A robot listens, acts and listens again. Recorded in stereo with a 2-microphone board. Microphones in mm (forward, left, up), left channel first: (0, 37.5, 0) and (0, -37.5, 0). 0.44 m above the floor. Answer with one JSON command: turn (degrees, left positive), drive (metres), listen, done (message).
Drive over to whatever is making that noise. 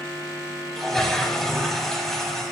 {"turn": 30}
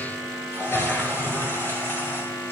{"turn": 145}
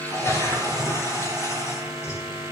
{"turn": 50}
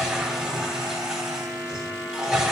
{"turn": -10}
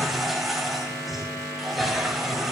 {"drive": 1.0}
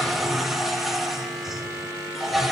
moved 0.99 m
{"drive": 1.0}
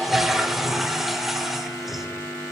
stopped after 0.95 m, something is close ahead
{"done": "Arrived at the toilet flushing, straight ahead."}